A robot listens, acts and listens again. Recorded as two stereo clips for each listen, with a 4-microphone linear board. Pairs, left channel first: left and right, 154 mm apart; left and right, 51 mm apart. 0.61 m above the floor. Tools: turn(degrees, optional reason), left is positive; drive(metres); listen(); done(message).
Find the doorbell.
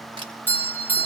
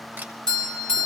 turn(degrees=30)
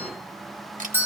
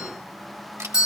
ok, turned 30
turn(degrees=-15, reason="So it is at 15° right.")
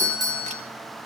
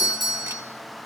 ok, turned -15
done("Facing the doorbell.")